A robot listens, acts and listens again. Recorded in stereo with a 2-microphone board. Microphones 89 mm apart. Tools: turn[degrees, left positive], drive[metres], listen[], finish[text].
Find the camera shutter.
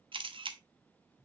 Thought: The camera shutter: about 75° right or 105° right.
Action: turn[-75]
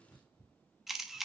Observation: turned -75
Action: finish[Found it: a camera shutter, straight ahead.]